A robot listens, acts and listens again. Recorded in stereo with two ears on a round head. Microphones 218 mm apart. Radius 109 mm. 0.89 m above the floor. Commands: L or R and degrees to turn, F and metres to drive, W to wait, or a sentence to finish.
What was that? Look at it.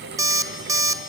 R30
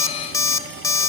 L15
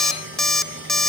Found it: an alarm clock, straight ahead.